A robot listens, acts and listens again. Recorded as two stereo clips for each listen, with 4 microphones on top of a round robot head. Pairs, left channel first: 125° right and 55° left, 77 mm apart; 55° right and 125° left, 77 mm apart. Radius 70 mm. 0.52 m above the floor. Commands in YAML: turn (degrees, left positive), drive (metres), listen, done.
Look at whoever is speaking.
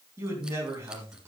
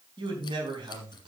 turn: 115
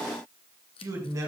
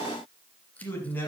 turn: 10
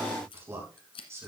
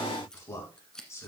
done: "Found it: a man speaking, straight ahead, over 4 m away."